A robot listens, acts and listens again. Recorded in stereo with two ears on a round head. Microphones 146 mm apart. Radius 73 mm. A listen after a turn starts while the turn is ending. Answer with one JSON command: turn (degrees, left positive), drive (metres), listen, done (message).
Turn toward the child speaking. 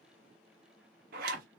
{"listen": true}
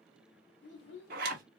{"turn": 90}
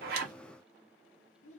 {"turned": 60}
{"turn": 40}
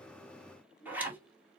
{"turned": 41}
{"done": "Found it: a child speaking, straight ahead, 1 to 2 m away."}